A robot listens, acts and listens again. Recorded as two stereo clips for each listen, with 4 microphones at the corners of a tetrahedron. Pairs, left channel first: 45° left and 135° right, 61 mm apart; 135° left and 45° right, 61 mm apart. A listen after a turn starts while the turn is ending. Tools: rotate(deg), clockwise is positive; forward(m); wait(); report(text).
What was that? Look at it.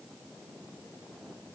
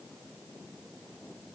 wait()
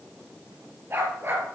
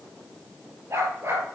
rotate(90)
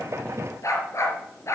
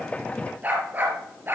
rotate(-10)
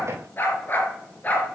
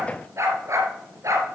rotate(15)
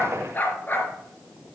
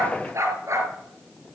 rotate(10)
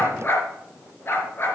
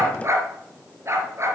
report("Facing the dog barking, 2 to 4 m away.")